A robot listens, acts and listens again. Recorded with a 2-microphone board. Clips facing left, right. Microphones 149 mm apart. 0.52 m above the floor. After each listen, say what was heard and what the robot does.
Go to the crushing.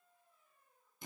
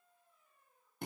Keep listening.
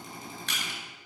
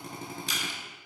The crushing: about 70° left or 110° left. Turn 70° left.
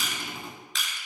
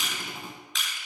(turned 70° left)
Drive 1.0 m forward.
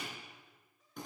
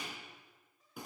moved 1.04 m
Keep listening.
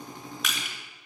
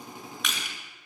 Drive 1.0 m forward.
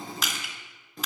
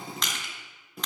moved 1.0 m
Drive 1.0 m forward.
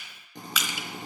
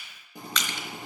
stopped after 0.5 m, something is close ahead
The crushing is now 10° left. Turn 10° left.
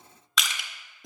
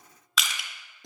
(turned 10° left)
Arrived at the crushing, straight ahead.